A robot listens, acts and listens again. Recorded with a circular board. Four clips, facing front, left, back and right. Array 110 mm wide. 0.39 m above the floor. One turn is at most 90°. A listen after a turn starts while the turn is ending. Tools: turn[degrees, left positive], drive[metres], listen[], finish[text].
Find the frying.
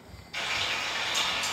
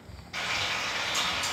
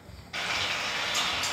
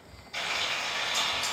Thought: The frying: 150° left.
Action: turn[90]
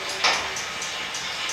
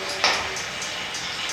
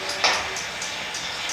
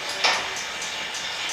Thought: The frying is now 85° left.
Action: turn[85]
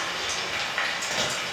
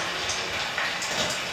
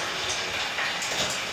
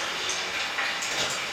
Thought: The frying is now 30° left.
Action: turn[30]
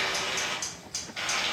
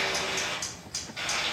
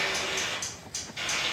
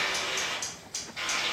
Action: finish[Facing the frying.]